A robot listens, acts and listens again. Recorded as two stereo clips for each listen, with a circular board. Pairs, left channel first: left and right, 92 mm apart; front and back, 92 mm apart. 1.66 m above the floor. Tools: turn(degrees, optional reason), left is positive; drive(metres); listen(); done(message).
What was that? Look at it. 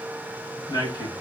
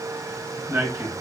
turn(degrees=120, reason="The man speaking: 120° left.")
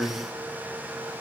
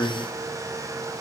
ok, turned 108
turn(degrees=15, reason="The man speaking is now 15° left.")
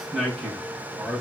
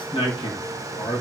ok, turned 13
done("Facing the man speaking.")